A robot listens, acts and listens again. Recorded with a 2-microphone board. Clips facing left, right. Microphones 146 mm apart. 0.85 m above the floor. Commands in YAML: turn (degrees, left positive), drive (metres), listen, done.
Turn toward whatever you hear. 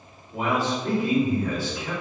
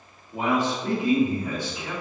turn: -20
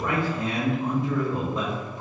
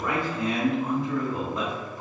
done: "Found it: a man speaking, straight ahead."